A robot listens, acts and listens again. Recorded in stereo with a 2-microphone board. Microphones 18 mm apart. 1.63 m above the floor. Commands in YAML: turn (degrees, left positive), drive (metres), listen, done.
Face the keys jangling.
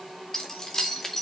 turn: 25
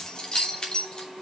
turn: 135
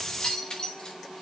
turn: 40
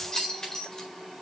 turn: 35
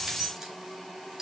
turn: -20
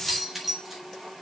turn: -10
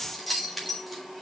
done: "Facing the keys jangling."